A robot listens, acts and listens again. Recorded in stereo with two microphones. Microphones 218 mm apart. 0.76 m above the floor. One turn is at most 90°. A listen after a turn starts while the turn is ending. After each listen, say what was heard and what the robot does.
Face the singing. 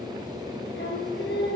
The singing: about 55° left or 125° left. Turn 55° left.
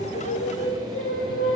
So it is at 70° left. Turn 70° left.
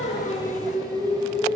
The singing is now 10° left. Turn 10° left.
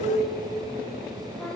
Found it: singing, straight ahead, over 4 m away.